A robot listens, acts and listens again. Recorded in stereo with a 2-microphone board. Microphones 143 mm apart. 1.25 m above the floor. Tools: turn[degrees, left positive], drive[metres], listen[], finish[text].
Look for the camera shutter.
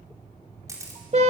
Thought: The camera shutter: about 20° right or 160° right.
Action: turn[-20]
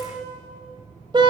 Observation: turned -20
Action: listen[]
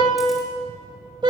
Action: listen[]
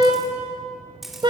Action: finish[Found it: a camera shutter, straight ahead.]